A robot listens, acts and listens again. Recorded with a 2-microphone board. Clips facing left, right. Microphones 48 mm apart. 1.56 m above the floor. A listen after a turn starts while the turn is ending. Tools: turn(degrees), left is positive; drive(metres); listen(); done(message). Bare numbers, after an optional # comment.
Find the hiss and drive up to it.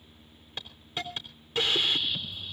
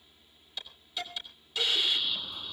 # The hiss: about 45° left or 135° left.
turn(45)
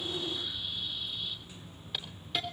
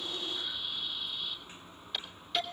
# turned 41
drive(1.0)
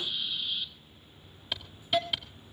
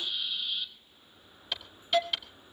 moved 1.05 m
drive(1.0)
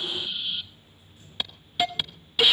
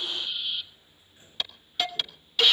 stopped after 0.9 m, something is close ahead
# The hiss is now 15° left.
turn(15)
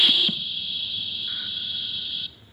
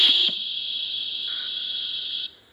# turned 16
done("Arrived at the hiss, straight ahead.")